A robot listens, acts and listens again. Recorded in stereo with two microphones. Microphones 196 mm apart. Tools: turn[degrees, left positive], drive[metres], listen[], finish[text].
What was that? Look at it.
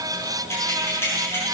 Action: turn[30]
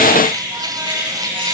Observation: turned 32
Thought: So it is at 25° right.
Action: turn[-25]
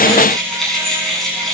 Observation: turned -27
Action: finish[Found it: keys jangling, straight ahead.]